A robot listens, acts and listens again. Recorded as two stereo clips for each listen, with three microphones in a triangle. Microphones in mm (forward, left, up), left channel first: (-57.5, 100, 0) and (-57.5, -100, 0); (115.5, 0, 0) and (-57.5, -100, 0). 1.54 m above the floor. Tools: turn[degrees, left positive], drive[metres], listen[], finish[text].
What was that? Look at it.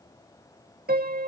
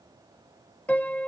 Thought: The piano: 55° right.
Action: turn[-55]
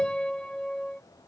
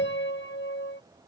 Action: finish[Facing the piano.]